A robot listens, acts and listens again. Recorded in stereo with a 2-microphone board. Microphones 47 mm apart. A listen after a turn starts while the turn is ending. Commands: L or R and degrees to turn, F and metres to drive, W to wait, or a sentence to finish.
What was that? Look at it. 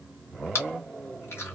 L65
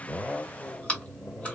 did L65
L30
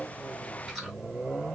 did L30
W
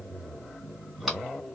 W
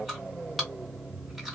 Facing the chewing.